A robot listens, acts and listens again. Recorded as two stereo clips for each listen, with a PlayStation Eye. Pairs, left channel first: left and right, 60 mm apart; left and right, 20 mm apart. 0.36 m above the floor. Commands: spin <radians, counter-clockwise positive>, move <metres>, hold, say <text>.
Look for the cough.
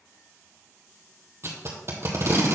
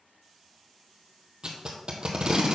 hold
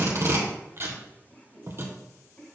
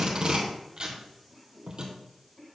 spin 0.26
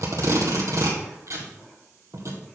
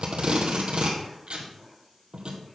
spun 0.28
hold
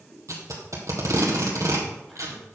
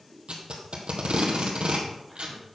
say Facing the cough, 2 to 4 m away.